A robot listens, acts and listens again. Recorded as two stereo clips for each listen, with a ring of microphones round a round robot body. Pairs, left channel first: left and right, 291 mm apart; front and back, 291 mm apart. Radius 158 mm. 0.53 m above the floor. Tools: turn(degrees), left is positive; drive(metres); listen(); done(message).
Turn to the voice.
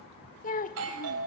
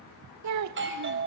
turn(degrees=155)
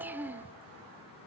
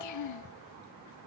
done("Facing the child speaking.")